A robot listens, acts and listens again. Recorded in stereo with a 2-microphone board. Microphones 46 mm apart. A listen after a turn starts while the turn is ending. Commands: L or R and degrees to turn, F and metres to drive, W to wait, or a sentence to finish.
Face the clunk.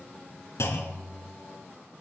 L90
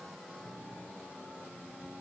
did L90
I heard a clunk from this way, but can't make it out now.